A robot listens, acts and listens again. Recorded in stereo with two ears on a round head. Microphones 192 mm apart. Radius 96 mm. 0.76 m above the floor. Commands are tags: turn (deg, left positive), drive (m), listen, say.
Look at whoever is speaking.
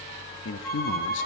<turn deg="60"/>
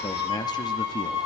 <turn deg="25"/>
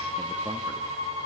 <listen/>
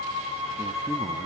<listen/>
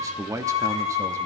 <turn deg="-15"/>
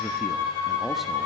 <listen/>
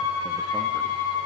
<listen/>
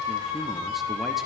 <say>Facing where the man speaking came from. I can't hear it now.</say>